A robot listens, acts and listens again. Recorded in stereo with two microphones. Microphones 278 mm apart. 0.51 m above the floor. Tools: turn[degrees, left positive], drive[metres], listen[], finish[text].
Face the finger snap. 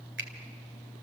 Thought: The finger snap: about 40° right or 140° right.
Action: turn[-40]
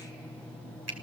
Thought: So it is at 90° right.
Action: turn[-90]
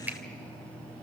Action: finish[Found it: a finger snap, straight ahead, 2 to 4 m away.]